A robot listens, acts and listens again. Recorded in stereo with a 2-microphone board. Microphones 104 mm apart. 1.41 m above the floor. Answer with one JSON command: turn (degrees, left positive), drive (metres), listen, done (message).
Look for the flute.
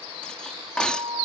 {"turn": -65}
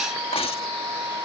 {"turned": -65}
{"turn": -40}
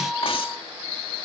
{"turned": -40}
{"listen": true}
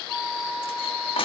{"done": "Found it: a flute, straight ahead."}